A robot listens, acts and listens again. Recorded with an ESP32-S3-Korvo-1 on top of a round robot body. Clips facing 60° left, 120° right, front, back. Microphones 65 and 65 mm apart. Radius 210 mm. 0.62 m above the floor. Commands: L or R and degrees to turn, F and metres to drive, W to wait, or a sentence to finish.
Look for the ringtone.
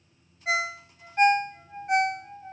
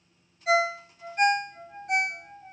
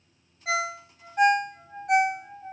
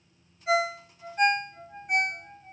Facing the ringtone.